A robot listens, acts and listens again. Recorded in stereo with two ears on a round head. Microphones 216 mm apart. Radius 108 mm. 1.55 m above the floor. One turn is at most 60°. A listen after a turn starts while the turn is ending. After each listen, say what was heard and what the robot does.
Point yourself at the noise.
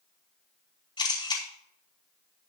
The camera shutter: about 20° left or 160° left. Turn 20° left.
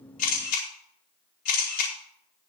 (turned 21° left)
So it is at 135° left. Turn 60° left.
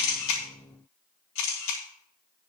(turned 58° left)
The camera shutter is now 80° left. Turn 60° left.
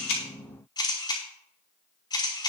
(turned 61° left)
The camera shutter is now 20° left. Turn 20° left.
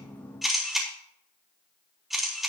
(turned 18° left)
Found it: a camera shutter, straight ahead, over 4 m away.